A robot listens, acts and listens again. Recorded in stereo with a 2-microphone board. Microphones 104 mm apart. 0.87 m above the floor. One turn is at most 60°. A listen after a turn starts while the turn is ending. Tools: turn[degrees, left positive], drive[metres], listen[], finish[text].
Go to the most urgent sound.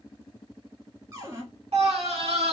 Action: turn[-60]
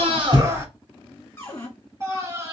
Thought: So it is at 25° right.
Action: turn[-25]
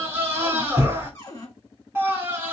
Thought: The scream is now 20° right.
Action: turn[-20]
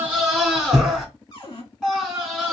Action: drive[1.0]
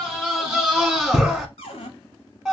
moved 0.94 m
Action: drive[1.0]
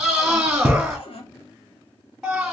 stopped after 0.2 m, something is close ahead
Thought: The scream is now 10° right.
Action: turn[-10]
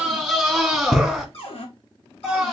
Action: finish[Arrived at the scream, straight ahead.]